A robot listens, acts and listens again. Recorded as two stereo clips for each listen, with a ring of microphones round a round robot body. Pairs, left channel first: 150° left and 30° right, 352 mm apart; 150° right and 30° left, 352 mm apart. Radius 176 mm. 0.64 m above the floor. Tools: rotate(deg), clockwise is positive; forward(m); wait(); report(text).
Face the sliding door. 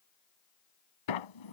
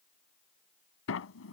rotate(-155)
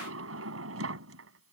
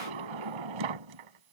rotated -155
rotate(-25)
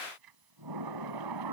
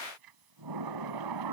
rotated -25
report("Found it: a sliding door, straight ahead.")